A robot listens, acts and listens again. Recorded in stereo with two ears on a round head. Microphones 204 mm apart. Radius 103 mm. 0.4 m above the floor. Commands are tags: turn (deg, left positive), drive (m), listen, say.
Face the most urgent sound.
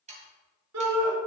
<turn deg="-90"/>
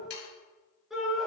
<say>Facing the shout.</say>